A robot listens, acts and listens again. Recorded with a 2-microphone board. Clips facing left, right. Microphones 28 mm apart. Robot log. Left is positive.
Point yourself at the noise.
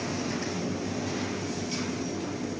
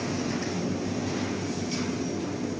cmd idle
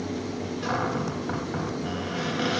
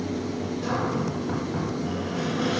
note: The cupboard door: about 35° left or 145° left.
cmd yaw +35
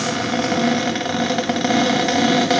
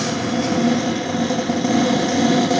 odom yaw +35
note: So it is at 115° left.
cmd yaw +115
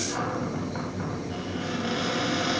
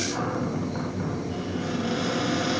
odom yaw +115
note: The cupboard door is now 10° left.
cmd yaw +10
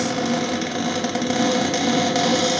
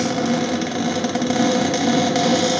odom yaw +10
end: Found it: a cupboard door, straight ahead, 2 to 4 m away.